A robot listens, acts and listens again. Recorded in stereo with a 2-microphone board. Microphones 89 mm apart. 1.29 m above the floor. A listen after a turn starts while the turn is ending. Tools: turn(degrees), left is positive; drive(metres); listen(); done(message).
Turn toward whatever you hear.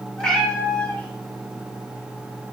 turn(degrees=15)
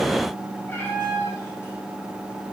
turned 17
turn(degrees=25)
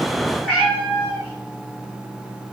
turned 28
turn(degrees=30)
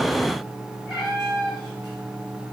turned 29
turn(degrees=-10)
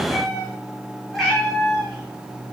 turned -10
done("Found it: a cat meowing, straight ahead.")